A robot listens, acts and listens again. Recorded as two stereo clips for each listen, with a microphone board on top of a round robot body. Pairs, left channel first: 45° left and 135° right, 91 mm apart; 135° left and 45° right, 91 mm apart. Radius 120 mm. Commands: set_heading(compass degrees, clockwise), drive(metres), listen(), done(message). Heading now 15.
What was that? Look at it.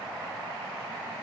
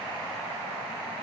listen()
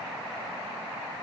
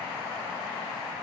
listen()
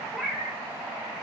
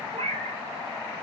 set_heading(65)
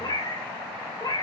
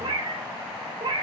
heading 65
done("Facing the cat meowing, 1 to 2 m away.")